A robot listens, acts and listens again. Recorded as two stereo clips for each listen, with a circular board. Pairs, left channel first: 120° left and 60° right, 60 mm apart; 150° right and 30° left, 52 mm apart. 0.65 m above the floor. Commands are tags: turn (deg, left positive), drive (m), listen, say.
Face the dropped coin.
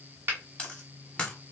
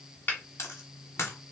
<turn deg="-165"/>
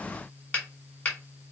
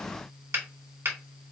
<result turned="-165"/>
<say>Facing where the dropped coin came from. I can't hear it now.</say>